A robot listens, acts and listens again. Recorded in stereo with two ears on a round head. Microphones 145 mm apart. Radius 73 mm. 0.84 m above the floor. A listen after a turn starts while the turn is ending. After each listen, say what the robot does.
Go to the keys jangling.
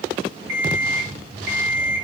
Keep listening.
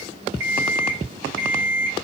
Keep listening.
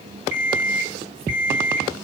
I can't make out keys jangling, only an alarm clock.